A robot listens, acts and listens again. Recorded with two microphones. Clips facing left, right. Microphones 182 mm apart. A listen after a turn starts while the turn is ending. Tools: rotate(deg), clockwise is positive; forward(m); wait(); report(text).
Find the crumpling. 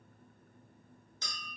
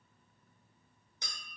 wait()
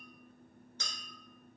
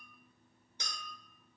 wait()
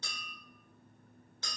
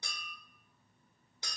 report("I can't make out crumpling to turn to.")